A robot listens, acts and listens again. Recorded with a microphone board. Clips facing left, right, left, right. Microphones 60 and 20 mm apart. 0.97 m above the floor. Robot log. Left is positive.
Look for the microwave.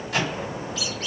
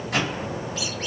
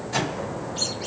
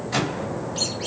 cmd yaw -90
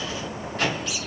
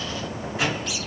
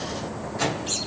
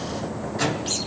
note: So it is at 10° right.
cmd yaw -10
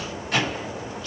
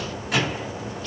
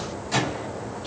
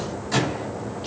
end: Found it: a microwave, straight ahead, 2 to 4 m away.